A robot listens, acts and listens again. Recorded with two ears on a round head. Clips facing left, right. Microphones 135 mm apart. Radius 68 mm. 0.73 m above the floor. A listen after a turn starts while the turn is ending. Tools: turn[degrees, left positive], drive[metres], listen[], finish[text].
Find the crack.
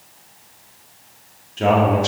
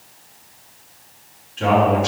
Action: listen[]
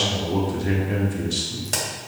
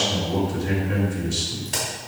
Thought: The crack: about 65° left or 115° left.
Action: turn[65]
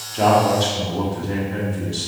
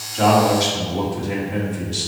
Action: listen[]
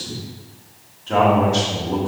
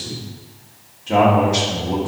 Action: finish[I heard a crack, but can't make it out now. It was about straight ahead or 50° left.]